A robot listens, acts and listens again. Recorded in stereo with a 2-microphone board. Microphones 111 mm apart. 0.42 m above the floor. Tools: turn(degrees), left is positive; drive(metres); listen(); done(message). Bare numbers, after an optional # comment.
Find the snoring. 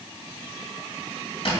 listen()
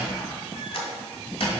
listen()
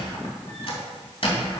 done("I can't make out snoring, only a squeak.")